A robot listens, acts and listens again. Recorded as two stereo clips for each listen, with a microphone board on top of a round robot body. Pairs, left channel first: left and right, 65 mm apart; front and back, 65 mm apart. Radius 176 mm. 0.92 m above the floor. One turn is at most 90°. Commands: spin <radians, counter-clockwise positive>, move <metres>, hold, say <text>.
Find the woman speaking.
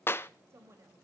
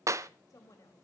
spin -0.70
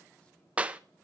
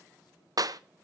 hold
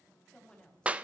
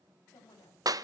spin 0.26
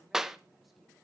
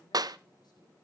hold
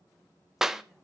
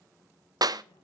hold
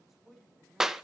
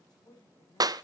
say Facing the woman speaking.